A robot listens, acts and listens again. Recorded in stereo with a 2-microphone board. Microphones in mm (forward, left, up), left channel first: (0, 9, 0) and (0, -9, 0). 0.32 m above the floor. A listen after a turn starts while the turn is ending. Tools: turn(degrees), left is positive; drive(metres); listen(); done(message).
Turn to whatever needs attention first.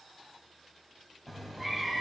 listen()
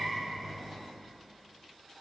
listen()
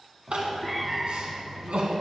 turn(degrees=-65)
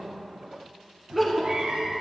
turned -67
done("Facing the crying, 1 to 2 m away.")